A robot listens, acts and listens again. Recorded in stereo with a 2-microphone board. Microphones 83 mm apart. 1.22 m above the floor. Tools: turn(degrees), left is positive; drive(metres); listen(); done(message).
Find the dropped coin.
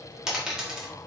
turn(degrees=-30)
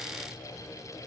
listen()
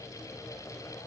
done("I heard a dropped coin, but can't make it out now. It was about 25° left or 145° right.")